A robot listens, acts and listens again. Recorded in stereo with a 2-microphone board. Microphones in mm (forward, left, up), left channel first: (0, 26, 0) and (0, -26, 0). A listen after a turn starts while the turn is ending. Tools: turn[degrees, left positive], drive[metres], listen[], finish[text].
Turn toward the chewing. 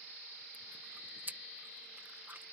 Thought: The chewing: about 40° right or 140° right.
Action: turn[-40]
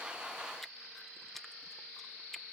Action: finish[Found it: chewing, straight ahead.]